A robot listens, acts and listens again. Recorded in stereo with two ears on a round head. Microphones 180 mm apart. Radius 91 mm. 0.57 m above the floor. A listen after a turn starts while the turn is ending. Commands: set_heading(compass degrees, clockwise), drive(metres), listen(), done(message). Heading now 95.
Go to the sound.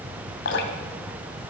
set_heading(30)
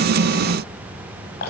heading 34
set_heading(344)
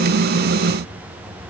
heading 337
listen()
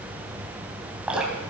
drive(1.0)
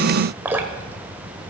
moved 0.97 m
set_heading(347)
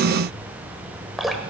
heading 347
drive(1.0)
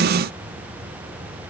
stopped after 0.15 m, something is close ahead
listen()
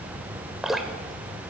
done("Arrived at the dripping, straight ahead.")